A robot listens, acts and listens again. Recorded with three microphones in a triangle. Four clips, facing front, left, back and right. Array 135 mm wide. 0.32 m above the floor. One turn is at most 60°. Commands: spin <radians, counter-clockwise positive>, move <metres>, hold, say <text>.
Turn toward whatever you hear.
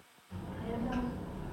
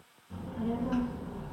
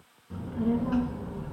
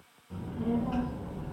spin 1.05
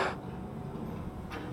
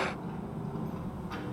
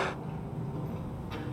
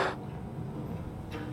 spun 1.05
spin 1.05
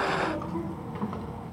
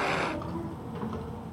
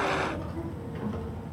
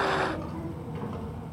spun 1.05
say Found it: a child speaking, straight ahead.